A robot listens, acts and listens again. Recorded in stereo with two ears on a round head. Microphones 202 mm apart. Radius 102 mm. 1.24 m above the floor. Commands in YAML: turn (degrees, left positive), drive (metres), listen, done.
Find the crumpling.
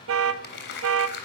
turn: 55
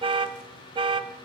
listen: true
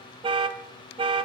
listen: true
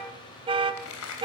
turn: 70
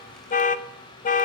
listen: true
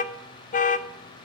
listen: true
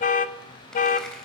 done: "Facing the crumpling."